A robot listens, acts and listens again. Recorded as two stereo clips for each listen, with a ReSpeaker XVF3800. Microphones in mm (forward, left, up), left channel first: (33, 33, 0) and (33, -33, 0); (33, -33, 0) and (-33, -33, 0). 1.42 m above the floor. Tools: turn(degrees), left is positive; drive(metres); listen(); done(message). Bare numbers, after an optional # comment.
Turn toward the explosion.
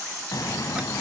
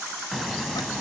# The explosion: 90° left.
turn(90)
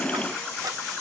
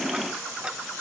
done("Facing where the explosion came from. I can't hear it now.")